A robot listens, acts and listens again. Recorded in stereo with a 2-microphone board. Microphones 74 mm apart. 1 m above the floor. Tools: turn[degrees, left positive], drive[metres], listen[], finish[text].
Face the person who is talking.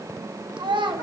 Action: turn[-90]
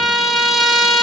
Action: listen[]
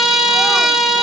Action: listen[]
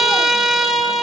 Action: finish[Facing where the child speaking came from. I can't hear it now.]